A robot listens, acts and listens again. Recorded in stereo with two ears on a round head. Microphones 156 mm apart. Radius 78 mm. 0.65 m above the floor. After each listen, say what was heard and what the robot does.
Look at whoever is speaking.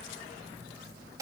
Keep listening.
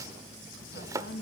The woman speaking: about 60° left or 120° left. Turn 60° left.
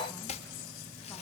Keep listening.
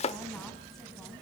Keep listening.
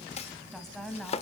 Facing the woman speaking.